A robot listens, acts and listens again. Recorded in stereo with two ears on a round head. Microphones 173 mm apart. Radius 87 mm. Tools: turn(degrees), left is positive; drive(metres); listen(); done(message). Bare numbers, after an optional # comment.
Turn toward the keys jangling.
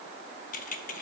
# The keys jangling: about 45° left or 135° left.
turn(45)
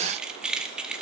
done("Facing the keys jangling.")